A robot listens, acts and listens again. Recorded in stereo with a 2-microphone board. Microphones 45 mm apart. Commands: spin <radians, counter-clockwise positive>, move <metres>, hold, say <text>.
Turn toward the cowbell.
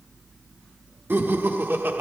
hold
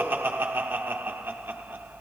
hold
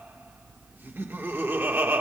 say I can't make out a cowbell, only laughter.